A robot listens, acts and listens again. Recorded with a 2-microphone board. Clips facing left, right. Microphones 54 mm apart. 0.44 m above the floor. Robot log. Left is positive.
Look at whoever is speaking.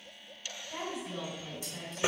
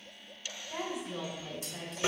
note: The woman speaking: about 20° right or 160° right.
cmd yaw -20
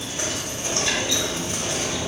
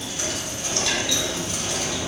cmd idle
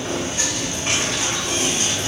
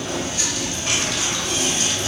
cmd idle
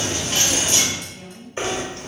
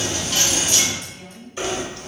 end: Found it: a woman speaking, straight ahead.